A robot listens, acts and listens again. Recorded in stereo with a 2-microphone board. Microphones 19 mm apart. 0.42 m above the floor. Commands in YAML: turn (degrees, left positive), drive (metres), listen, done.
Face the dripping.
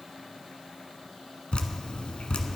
turn: 90
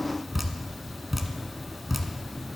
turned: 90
done: "Facing the dripping, 1 to 2 m away."